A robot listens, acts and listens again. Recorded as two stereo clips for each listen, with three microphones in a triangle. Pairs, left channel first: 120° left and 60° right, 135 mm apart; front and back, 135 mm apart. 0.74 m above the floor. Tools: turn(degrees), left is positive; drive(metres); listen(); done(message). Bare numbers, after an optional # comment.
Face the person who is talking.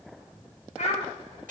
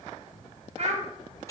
# The child speaking: 145° left.
turn(145)
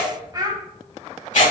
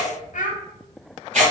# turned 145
done("Facing the child speaking.")